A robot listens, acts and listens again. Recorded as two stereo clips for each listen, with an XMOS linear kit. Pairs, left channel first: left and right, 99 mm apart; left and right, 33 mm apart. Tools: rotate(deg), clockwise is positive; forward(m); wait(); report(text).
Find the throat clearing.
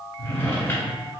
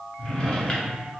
wait()
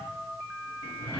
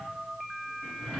wait()
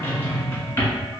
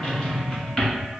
report("I can't make out throat clearing to turn to.")